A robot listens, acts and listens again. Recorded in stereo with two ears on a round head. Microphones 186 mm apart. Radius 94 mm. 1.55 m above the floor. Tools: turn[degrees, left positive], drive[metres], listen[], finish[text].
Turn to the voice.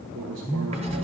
Thought: The man speaking: about 65° right or 115° right.
Action: turn[-65]
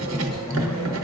Action: listen[]
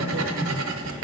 Action: listen[]
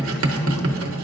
Action: finish[I heard a man speaking, but can't make it out now. It was about straight ahead or 50° right.]